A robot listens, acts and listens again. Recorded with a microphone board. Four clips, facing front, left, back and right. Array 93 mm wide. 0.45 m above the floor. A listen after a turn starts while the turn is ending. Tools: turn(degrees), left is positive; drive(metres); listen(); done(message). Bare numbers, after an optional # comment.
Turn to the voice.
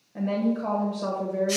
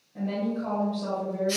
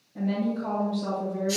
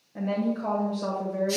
# The woman speaking: 30° right.
turn(-30)
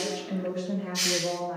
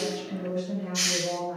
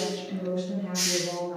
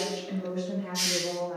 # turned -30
done("Facing the woman speaking, 1 to 2 m away.")